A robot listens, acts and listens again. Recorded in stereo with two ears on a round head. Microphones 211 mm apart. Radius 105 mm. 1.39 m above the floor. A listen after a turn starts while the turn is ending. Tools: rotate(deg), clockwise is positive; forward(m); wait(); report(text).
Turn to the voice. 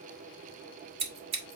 wait()
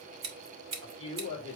rotate(-25)
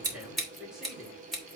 report("Found it: a man speaking, straight ahead.")